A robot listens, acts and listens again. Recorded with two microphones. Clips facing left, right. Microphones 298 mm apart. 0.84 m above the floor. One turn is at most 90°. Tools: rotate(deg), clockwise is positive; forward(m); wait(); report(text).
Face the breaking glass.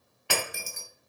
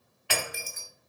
rotate(-55)
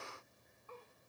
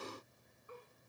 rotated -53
wait()
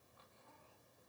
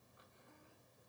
report("I heard breaking glass, but can't make it out now. It was about straight ahead or 75° left.")